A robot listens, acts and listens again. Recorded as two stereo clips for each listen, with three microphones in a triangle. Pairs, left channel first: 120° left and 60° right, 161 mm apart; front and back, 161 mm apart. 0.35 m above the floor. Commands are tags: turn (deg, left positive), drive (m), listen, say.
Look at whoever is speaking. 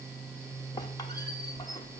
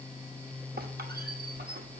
<listen/>
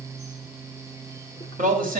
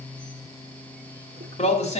<turn deg="-40"/>
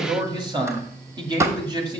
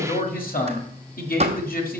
<say>Facing the man speaking, 1 to 2 m away.</say>